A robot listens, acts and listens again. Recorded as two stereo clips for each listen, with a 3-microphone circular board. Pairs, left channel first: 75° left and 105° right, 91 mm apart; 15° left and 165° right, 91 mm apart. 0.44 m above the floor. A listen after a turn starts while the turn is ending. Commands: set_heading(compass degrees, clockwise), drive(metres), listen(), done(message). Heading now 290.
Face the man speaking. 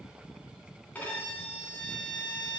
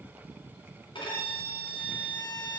listen()
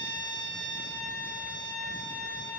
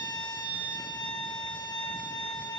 listen()
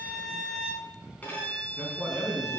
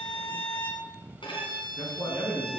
set_heading(320)
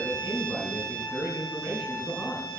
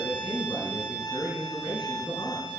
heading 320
done("Found it: a man speaking, straight ahead, 2 to 4 m away.")